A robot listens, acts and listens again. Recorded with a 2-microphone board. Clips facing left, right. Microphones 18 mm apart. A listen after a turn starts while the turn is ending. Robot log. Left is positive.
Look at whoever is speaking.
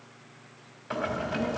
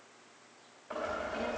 cmd yaw -30
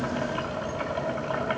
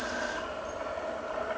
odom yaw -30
note: So it is at 20° left.
cmd yaw +20
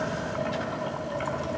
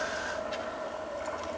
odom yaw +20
end: Facing the child speaking, 1 to 2 m away.